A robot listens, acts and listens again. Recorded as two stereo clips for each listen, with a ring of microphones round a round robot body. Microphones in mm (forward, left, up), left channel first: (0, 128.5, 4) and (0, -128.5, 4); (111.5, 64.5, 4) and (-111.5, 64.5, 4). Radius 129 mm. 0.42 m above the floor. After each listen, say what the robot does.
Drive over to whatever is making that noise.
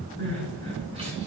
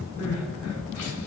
Turn 20° right.
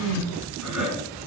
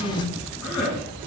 Drive 1.0 m forward.
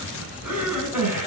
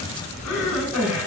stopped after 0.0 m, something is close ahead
Something is in my way. I am facing the crying but have not reached it.